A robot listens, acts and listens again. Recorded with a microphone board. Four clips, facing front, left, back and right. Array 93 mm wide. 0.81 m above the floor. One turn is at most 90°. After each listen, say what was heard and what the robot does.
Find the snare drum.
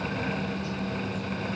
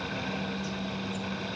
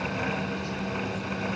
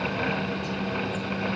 Keep listening.
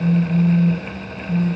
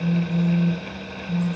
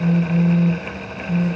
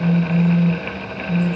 Keep listening.
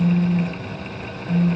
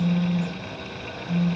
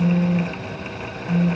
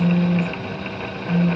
I can't make out a snare drum, only a phone buzzing.